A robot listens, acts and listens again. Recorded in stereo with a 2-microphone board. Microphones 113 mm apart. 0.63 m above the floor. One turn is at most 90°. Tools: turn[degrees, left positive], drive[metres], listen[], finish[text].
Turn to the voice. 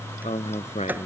Action: turn[90]
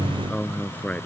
Thought: So it is at 15° left.
Action: turn[15]
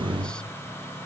Action: listen[]
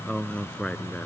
Thought: The man speaking is now 10° left.
Action: turn[10]
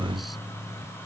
Action: listen[]
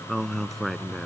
Action: finish[Found it: a man speaking, straight ahead.]